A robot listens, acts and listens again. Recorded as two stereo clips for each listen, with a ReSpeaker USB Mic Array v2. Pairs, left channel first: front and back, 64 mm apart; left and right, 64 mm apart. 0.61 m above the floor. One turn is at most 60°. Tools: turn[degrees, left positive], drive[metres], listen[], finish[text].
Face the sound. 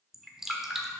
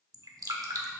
Thought: The dripping: 95° right.
Action: turn[-60]
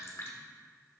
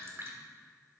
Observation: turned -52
Thought: The dripping is now 45° right.
Action: turn[-45]
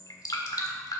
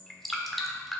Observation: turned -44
Action: finish[Facing the dripping.]